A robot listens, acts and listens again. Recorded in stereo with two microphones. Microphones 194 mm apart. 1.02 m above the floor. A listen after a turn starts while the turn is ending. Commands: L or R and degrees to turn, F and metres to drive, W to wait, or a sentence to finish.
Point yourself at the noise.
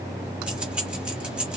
R30
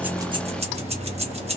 R145
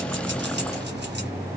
W
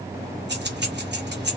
R60
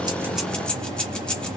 Facing the keys jangling, 1 to 2 m away.